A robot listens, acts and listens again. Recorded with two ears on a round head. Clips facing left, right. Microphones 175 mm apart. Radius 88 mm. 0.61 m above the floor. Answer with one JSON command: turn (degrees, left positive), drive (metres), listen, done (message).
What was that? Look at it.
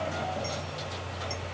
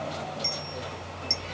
{"turn": -55}
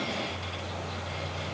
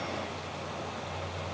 {"listen": true}
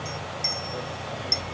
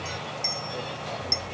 {"done": "Facing the clink."}